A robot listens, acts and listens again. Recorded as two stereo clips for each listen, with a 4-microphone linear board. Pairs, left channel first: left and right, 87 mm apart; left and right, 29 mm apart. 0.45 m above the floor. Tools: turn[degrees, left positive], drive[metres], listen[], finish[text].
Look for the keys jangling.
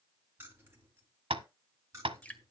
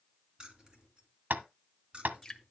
Thought: The keys jangling: about 30° right or 150° right.
Action: turn[-30]
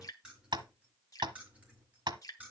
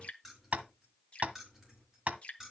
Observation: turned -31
Thought: So it is at 15° right.
Action: turn[-15]
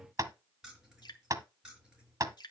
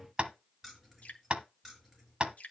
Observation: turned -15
Thought: The keys jangling is now 10° right.
Action: turn[-10]
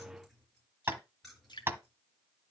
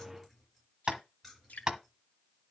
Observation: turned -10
Action: finish[Facing the keys jangling, over 4 m away.]